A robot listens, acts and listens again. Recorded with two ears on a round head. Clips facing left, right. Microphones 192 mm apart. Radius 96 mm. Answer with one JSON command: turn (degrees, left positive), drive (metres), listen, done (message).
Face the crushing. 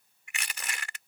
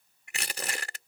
{"turn": -30}
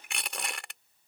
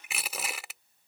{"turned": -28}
{"done": "Found it: crushing, straight ahead."}